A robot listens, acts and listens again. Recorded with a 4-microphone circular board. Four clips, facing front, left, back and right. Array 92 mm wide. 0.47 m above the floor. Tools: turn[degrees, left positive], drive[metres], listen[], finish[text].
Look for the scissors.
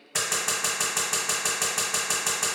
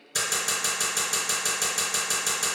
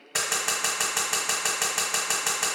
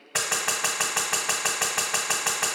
Thought: The scissors: 105° right.
Action: turn[-105]
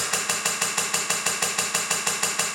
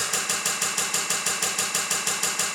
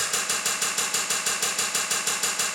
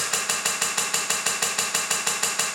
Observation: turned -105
Thought: The scissors is now 35° right.
Action: turn[-35]
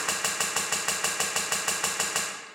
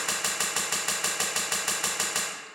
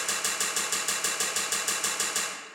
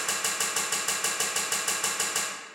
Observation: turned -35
Thought: The scissors is now 10° left.
Action: turn[10]
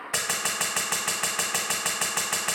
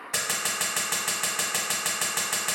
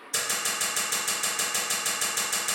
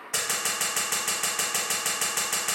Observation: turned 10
Action: finish[Found it: scissors, straight ahead.]